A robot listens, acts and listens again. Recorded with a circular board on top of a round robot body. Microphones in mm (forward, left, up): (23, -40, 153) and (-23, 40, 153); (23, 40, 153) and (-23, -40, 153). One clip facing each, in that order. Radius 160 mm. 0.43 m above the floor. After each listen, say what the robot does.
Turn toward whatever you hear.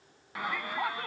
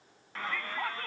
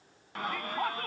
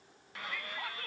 Turn 15° left.
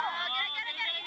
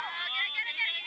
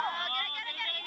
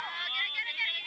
Facing the shout.